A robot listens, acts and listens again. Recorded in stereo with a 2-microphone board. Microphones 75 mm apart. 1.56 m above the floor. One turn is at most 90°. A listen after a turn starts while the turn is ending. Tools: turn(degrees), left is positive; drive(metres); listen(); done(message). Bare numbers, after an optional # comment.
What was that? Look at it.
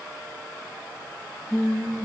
turn(30)
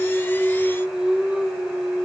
# So it is at 10° right.
turn(-10)
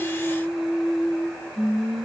done("Found it: singing, straight ahead.")